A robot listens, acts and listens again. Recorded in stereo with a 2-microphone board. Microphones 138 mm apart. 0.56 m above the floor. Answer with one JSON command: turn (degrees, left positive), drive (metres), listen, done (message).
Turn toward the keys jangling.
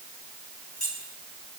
{"turn": 65}
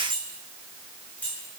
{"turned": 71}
{"turn": 10}
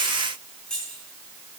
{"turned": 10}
{"done": "Found it: keys jangling, straight ahead."}